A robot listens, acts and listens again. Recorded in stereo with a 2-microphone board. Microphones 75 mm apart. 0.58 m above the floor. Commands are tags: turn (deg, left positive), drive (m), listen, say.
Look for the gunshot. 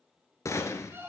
<turn deg="40"/>
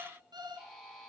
<listen/>
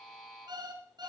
<say>I heard a gunshot, but can't make it out now. It was about straight ahead or 100° left.</say>